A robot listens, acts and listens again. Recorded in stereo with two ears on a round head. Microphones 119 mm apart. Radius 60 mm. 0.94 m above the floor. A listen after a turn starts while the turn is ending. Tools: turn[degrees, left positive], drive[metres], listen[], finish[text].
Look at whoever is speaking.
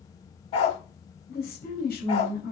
Action: turn[90]
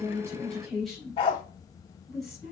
Action: finish[Found it: a woman speaking, straight ahead, over 4 m away.]